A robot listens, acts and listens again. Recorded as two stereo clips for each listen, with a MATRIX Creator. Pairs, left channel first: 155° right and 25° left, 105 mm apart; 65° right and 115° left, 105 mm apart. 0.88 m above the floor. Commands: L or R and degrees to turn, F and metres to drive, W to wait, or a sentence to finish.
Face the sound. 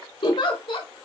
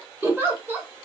L180
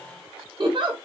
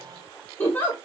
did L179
Found it: a giggle, straight ahead, under 1 m away.